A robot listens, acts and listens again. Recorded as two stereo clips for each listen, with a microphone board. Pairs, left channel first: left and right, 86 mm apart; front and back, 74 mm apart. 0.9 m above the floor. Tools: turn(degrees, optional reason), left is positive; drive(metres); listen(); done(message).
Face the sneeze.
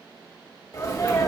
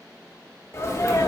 turn(degrees=45, reason="The sneeze: 45° left.")
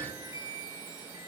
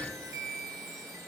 done("I heard a sneeze from this way, but can't make it out now.")